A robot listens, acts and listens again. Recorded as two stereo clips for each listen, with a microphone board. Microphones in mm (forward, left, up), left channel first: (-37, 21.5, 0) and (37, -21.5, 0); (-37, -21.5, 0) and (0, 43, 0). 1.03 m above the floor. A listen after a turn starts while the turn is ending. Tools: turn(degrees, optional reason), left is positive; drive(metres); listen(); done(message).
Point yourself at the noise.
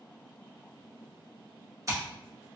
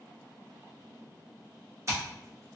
turn(degrees=15, reason="The scissors: 15° left.")
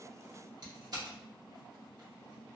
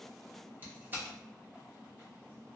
done("Facing the scissors, 1 to 2 m away.")